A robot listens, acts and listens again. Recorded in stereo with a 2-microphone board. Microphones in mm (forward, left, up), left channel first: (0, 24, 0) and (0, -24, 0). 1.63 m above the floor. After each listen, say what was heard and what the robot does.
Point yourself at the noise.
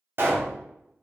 The pop: about 55° right or 125° right. Turn 55° right.
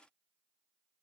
Keep listening.
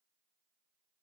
I heard a pop, but can't make it out now. It was about straight ahead or 70° right.